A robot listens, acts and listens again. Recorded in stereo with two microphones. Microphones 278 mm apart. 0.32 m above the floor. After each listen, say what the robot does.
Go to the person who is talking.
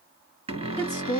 Turn 30° left.
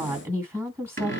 Turn 10° right.
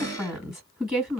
Drive 1.0 m forward.
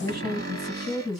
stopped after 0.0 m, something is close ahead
Something is in my way. I am facing the woman speaking but have not reached it.